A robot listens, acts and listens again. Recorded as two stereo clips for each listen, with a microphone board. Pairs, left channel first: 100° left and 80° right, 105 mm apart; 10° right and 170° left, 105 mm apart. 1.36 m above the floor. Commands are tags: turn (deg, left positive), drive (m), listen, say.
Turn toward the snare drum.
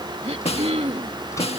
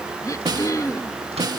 <turn deg="120"/>
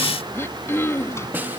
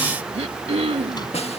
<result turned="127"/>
<say>Facing the snare drum.</say>